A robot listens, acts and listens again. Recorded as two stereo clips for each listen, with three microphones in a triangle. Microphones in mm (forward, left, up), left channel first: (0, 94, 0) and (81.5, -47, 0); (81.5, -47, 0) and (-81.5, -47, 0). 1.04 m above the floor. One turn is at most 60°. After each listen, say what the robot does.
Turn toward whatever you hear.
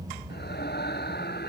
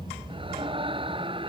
Turn 60° left.
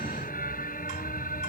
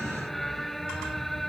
Turn 60° left.
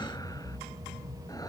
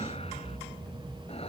Turn 30° left.
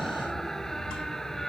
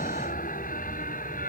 Turn 30° left.
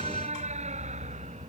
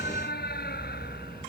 Turn 15° right.
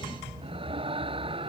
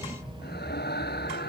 Found it: a scream, straight ahead.